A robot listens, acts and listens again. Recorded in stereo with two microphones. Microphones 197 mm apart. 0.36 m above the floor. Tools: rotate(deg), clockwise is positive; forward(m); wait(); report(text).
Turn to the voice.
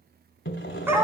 wait()
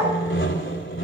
wait()
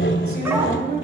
rotate(55)
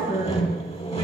wait()
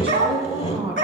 rotate(25)
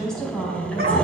report("Found it: a woman speaking, straight ahead, 2 to 4 m away.")